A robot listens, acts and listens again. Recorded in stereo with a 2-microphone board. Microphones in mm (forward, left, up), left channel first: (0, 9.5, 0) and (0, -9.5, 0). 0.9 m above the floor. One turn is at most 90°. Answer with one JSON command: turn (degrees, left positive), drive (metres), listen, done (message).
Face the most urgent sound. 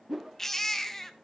{"turn": 20}
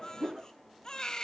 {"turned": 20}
{"turn": 90}
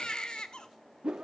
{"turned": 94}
{"turn": 45}
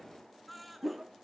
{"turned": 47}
{"done": "Facing the baby crying, 1 to 2 m away."}